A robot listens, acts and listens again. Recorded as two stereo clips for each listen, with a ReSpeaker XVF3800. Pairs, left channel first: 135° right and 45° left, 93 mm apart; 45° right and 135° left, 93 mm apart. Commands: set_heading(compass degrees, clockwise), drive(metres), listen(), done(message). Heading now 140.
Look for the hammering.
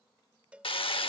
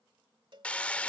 set_heading(260)
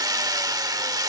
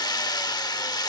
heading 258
done("Facing the hammering.")